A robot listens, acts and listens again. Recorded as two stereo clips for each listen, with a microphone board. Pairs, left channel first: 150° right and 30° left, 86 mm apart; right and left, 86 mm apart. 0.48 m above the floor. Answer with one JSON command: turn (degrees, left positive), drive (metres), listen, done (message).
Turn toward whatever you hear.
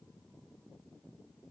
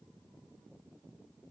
{"listen": true}
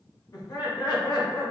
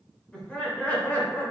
{"turn": -150}
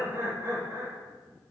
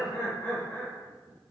{"turn": -15}
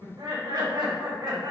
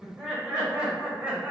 {"turn": 20}
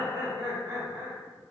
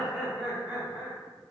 {"turn": 10}
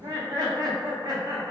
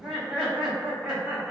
{"done": "Facing the laughter, 2 to 4 m away."}